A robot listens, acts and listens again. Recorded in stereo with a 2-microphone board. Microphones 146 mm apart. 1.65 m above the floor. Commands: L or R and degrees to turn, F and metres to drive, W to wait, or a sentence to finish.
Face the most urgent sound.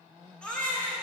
L30
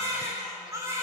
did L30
R25
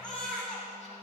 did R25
Facing the baby crying, 2 to 4 m away.